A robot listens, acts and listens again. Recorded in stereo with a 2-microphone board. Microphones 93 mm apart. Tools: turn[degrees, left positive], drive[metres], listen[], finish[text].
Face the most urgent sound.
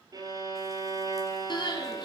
Thought: The crying: about 50° left or 130° left.
Action: turn[50]
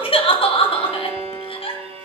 Thought: So it is at 80° left.
Action: turn[80]
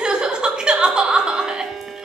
Thought: The crying is now 10° right.
Action: turn[-10]
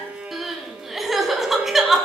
Action: finish[Facing the crying.]